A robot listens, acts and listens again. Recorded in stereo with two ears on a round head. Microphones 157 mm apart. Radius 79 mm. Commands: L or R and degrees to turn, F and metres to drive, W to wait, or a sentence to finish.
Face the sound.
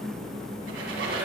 R90
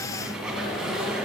Found it: a squeak, straight ahead, 1 to 2 m away.